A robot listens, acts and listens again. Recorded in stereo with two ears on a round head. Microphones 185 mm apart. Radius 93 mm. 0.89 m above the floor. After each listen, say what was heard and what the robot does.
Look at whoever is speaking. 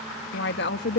The woman speaking: about 60° left or 120° left. Turn 60° left.
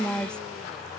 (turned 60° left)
Facing the woman speaking.